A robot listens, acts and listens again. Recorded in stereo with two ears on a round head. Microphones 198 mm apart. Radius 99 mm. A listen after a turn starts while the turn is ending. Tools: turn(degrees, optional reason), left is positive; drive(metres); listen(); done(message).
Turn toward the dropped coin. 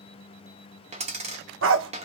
turn(degrees=-30, reason="The dropped coin: about 30° right or 150° right.")
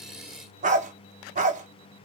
listen()
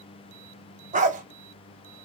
done("I heard a dropped coin, but can't make it out now. It was about straight ahead or 120° right.")